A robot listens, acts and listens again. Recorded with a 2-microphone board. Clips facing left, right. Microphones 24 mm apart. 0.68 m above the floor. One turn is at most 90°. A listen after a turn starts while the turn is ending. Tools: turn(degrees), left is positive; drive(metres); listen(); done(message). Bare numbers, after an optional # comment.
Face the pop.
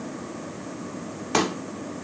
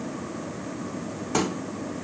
# The pop: about 55° left or 125° left.
turn(55)
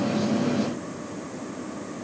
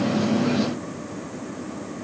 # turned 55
listen()
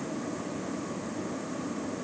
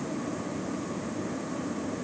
done("I heard a pop, but can't make it out now. It was about straight ahead or 70° left.")